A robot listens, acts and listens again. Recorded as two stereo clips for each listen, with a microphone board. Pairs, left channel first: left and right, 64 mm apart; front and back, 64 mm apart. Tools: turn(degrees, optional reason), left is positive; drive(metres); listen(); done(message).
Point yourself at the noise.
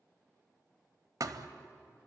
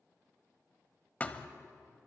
turn(degrees=-65, reason="The thud: 65° right.")
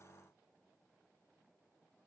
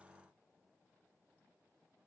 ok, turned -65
done("Facing where the thud came from. I can't hear it now.")